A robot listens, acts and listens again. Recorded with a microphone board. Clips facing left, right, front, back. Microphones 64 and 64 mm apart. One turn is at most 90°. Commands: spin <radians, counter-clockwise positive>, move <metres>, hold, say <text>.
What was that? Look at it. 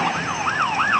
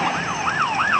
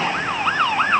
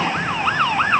hold
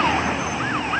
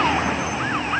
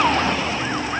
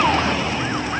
hold
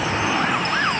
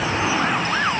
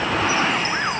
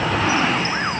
say I can't make out anything to turn to.